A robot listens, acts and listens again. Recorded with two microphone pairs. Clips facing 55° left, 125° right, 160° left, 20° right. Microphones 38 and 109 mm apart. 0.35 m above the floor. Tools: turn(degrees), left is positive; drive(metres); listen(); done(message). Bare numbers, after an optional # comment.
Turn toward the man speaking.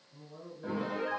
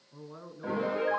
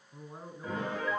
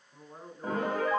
# The man speaking: 115° right.
turn(-115)
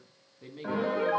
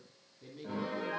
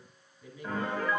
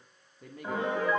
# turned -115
done("Found it: a man speaking, straight ahead.")